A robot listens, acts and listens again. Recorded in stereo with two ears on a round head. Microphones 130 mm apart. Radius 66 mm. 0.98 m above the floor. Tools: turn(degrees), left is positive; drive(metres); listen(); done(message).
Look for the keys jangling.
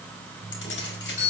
turn(degrees=90)
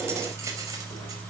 turn(degrees=-20)
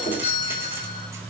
listen()
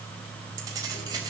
turn(degrees=-25)
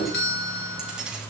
done("Found it: keys jangling, straight ahead.")